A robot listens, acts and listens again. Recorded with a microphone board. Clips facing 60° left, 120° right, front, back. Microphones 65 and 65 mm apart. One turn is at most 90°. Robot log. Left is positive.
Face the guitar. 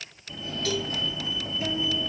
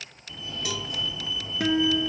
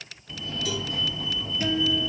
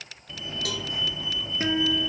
note: The guitar: 135° right.
cmd yaw -90
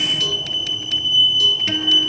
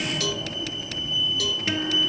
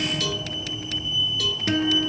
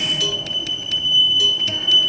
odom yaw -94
note: Nothing new. It was at 40° right.
cmd yaw -40
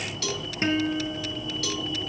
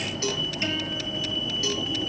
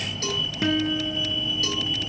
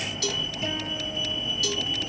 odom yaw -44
end: Facing the guitar, 2 to 4 m away.